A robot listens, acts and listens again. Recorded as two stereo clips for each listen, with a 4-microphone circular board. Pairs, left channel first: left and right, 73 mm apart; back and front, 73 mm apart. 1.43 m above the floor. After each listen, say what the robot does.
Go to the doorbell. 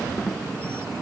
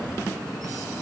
Keep listening.
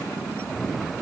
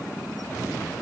Keep listening.
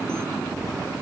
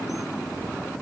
I can't make out a doorbell to turn to.